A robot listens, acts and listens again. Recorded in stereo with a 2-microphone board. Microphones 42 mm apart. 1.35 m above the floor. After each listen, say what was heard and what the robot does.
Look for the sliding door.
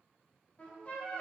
Keep listening.
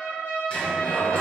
The sliding door: about 25° left or 155° left. Turn 25° left.
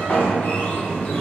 So it is at 130° left. Turn 130° left.
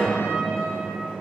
The sliding door is now 20° left. Turn 20° left.
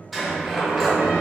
Facing the sliding door.